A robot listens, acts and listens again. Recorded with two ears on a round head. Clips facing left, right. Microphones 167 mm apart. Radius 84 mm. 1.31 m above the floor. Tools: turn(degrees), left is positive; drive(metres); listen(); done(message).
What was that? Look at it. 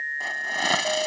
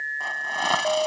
turn(degrees=20)
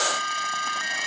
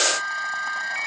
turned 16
listen()
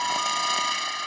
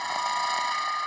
turn(degrees=145)
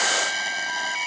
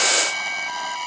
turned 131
turn(degrees=10)
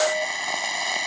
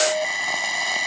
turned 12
done("Facing the hiss.")